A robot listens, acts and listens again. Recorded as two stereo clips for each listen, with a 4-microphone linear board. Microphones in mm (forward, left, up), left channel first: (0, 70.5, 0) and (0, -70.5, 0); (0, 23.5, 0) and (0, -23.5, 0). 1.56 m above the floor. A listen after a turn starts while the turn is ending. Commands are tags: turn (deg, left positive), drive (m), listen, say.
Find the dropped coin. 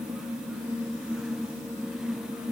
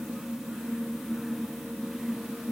<listen/>
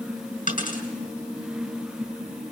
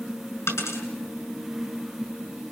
<turn deg="75"/>
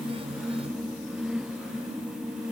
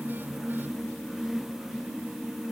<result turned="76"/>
<listen/>
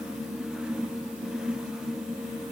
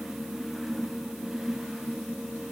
<say>I heard a dropped coin, but can't make it out now. It was about 5° right or 30° left.</say>